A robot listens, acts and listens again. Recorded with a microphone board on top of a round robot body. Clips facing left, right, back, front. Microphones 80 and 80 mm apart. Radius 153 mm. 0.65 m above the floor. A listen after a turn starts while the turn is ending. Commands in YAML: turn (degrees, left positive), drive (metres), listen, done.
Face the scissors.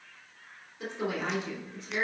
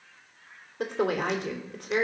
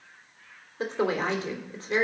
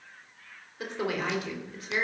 listen: true
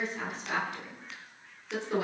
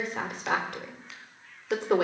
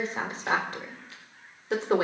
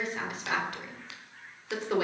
done: "Facing the scissors."